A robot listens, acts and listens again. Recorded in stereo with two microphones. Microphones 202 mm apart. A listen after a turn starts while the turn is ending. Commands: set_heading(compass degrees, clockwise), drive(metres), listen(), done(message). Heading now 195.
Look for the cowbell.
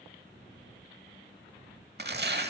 listen()
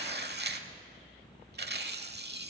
listen()
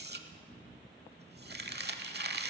done("I can't make out a cowbell to turn to.")